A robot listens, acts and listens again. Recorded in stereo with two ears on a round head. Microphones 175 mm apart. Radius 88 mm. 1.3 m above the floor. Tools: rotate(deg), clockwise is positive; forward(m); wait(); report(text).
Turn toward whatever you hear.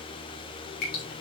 rotate(-50)
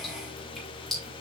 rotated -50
report("Facing the dripping, 2 to 4 m away.")